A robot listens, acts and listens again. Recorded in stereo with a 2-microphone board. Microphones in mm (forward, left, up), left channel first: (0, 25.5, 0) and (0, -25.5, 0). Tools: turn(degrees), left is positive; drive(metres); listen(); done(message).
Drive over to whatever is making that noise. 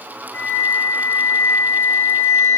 turn(degrees=65)
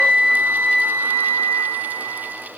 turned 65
turn(degrees=45)
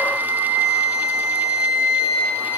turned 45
turn(degrees=-15)
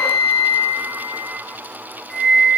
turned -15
drive(metres=1.0)
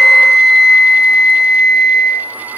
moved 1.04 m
drive(metres=1.0)
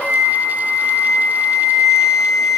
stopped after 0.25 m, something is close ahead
done("I am next to the flute.")